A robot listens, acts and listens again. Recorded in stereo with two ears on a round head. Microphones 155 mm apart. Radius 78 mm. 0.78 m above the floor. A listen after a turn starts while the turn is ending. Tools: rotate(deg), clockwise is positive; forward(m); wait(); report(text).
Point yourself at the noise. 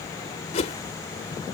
rotate(-40)
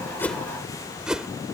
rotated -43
report("Found it: a whoosh, straight ahead.")